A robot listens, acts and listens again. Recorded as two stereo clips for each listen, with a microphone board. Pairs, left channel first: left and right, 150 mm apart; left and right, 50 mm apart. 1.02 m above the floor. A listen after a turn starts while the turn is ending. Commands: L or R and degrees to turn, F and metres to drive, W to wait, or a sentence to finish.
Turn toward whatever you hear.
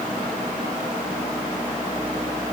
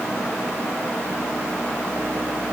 W
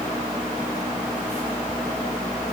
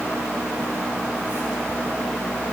W
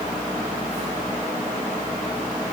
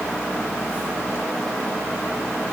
I can't make out anything to turn to.